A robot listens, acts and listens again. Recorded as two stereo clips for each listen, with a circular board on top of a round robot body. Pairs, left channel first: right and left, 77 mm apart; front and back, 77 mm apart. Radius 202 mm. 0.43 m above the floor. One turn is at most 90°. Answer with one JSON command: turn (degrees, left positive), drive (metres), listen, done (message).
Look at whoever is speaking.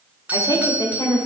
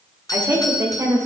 {"turn": -90}
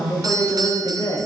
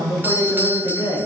{"turn": -45}
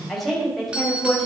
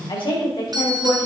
{"done": "Found it: a woman speaking, straight ahead."}